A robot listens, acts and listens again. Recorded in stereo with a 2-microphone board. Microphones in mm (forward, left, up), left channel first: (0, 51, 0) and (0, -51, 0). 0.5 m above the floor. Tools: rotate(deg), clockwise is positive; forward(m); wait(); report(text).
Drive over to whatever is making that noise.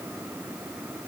wait()
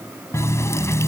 rotate(-30)
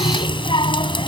rotate(-120)
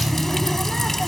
forward(1.0)
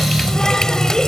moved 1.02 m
forward(1.0)
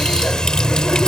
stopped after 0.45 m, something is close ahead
report("Arrived at the running tap, straight ahead.")